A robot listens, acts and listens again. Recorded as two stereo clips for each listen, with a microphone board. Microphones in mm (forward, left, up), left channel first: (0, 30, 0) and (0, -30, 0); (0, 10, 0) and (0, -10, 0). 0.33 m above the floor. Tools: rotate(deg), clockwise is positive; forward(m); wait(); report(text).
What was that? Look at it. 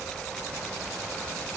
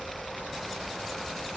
wait()
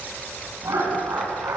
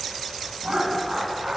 rotate(55)
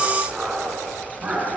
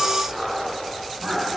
rotate(15)
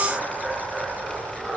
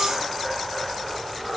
report("Facing the laughter.")